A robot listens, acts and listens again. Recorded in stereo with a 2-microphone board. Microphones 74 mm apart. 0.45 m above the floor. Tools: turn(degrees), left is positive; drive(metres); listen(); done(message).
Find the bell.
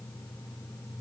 listen()
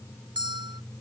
turn(degrees=-90)
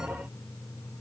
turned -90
turn(degrees=-10)
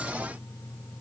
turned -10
listen()
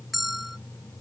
done("Found it: a bell, straight ahead.")